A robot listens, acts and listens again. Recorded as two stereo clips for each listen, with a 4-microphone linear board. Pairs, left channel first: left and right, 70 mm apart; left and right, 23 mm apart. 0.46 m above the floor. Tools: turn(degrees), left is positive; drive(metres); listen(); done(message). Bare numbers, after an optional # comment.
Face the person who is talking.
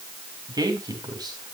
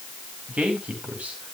# The man speaking: about 65° right or 115° right.
turn(-65)
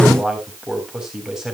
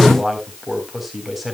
# So it is at 10° right.
turn(-10)
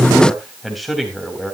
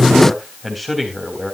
done("Facing the man speaking.")